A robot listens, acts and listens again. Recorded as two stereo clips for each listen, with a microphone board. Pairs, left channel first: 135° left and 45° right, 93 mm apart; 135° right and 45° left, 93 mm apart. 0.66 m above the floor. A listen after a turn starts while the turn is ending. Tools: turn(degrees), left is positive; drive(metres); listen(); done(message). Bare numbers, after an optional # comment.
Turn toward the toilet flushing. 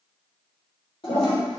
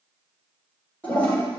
# The toilet flushing: 150° left.
turn(150)
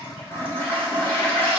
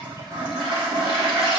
# The toilet flushing is now 65° left.
turn(65)
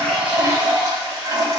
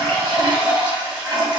done("Facing the toilet flushing.")